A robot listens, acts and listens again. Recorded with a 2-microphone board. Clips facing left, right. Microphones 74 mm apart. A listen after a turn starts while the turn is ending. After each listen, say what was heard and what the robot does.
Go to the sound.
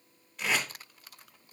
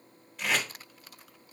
Turn 30° left.
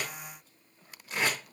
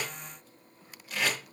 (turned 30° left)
So it is at 145° left. Turn 145° left.
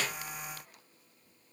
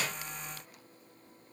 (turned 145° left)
Keep listening.
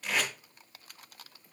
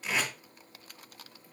Drive 1.0 m forward.
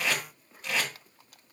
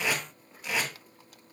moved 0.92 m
The tape being pulled is now 10° right. Turn 10° right.
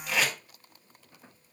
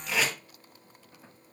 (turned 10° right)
Drive 1.0 m forward.
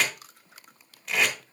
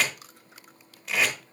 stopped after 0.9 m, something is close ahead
Arrived at the tape being pulled, straight ahead.